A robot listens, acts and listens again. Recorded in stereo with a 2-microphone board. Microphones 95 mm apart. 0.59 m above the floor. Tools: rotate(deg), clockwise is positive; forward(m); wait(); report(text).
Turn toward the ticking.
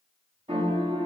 wait()
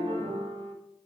wait()
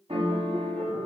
report("I can't make out ticking, only a piano.")